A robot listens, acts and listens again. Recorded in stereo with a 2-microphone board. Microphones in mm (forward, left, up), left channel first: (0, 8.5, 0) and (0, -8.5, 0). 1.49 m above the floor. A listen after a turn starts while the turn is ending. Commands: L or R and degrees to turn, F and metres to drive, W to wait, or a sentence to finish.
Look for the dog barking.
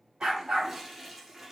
R65
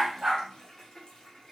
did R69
W
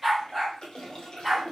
R15
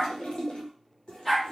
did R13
Facing the dog barking.